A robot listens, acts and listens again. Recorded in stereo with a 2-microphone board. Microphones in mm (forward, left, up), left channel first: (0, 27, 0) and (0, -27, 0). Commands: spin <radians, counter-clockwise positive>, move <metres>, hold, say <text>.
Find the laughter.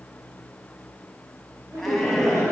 spin -1.05
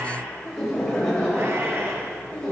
spin 0.26
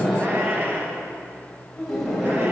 spin 0.17
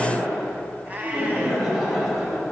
say Facing the laughter, over 4 m away.